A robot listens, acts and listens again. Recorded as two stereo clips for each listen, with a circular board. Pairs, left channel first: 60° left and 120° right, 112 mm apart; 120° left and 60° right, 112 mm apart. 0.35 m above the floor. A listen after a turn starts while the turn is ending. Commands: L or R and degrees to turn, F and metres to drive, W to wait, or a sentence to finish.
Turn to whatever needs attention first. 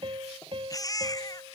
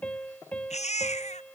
L115
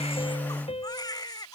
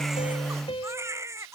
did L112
Found it: a baby crying, straight ahead.